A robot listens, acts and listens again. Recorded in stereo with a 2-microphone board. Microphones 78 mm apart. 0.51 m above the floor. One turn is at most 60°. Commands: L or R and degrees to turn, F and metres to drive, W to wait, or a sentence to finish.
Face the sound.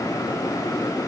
W
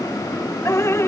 L35
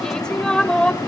L10
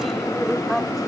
Found it: dripping, straight ahead.